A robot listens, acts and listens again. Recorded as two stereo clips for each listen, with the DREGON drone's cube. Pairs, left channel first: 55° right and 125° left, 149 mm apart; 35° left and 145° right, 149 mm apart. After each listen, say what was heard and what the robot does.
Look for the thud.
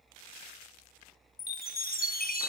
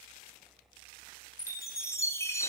Keep listening.
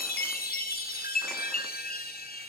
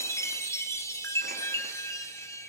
Keep listening.
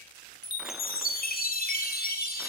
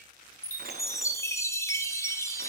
I can't make out a thud, only a chime.